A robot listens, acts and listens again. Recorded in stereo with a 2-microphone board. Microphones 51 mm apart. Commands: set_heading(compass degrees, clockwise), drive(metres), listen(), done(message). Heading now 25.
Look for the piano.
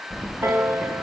set_heading(85)
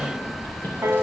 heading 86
set_heading(146)
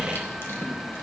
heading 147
listen()
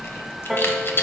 done("Found it: a piano, straight ahead, under 1 m away.")